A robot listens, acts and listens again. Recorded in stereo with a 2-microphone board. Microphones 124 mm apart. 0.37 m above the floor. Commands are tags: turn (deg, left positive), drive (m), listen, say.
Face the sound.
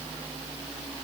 <listen/>
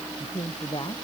<turn deg="45"/>
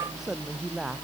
<say>Facing the man speaking.</say>